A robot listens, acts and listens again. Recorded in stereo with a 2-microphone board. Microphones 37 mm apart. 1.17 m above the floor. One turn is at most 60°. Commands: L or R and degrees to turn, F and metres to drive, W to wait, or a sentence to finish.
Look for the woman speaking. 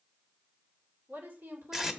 R60
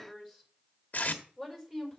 R10
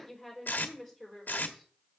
Facing the woman speaking, over 4 m away.